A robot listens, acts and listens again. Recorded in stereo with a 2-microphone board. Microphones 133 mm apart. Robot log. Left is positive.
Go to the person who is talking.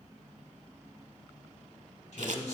note: The man speaking: about 55° left or 125° left.
cmd yaw +55
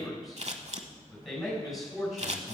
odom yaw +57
cmd fwd 1.0
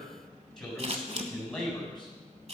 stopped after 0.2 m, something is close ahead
end: Blocked. The man speaking is further on, straight ahead.